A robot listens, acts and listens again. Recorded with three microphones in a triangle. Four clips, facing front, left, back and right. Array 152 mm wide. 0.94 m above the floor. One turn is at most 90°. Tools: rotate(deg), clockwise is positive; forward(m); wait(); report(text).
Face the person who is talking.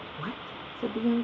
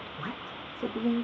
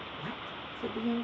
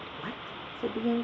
rotate(-40)
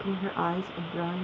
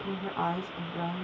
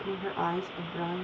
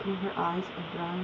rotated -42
report("Found it: a woman speaking, straight ahead, 1 to 2 m away.")